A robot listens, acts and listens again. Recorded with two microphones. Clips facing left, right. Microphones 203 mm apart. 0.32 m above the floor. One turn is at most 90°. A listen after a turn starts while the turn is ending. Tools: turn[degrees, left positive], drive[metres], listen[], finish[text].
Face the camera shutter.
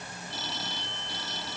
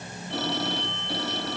Action: listen[]
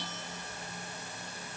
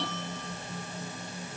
Action: listen[]
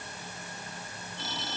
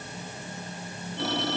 Action: finish[I can't make out a camera shutter, only a phone ringing.]